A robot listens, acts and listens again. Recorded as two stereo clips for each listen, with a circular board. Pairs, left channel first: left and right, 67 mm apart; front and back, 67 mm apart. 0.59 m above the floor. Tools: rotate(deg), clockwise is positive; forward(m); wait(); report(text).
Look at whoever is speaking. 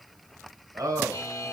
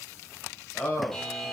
rotate(55)
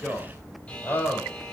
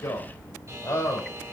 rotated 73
rotate(-35)
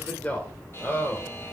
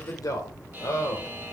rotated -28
rotate(-35)
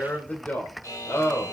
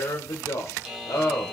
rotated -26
rotate(-40)
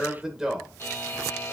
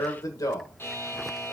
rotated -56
rotate(10)
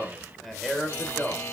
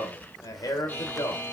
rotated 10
report("Facing the man speaking, 2 to 4 m away.")